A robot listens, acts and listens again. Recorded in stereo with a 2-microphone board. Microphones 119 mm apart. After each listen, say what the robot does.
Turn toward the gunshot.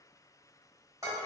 Keep listening.
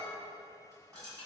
Keep listening.
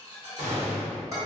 Turn 90° right.
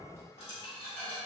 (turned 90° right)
Facing where the gunshot came from. I can't hear it now.